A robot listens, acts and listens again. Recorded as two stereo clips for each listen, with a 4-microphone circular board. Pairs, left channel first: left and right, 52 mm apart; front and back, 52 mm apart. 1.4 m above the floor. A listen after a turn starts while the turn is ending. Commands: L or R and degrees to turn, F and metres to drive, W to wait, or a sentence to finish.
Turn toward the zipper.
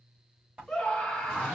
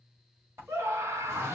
R160
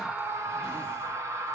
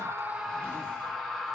W
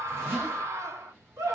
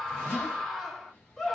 R55
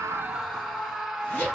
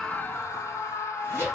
L25
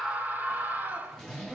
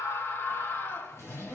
Found it: a zipper, straight ahead.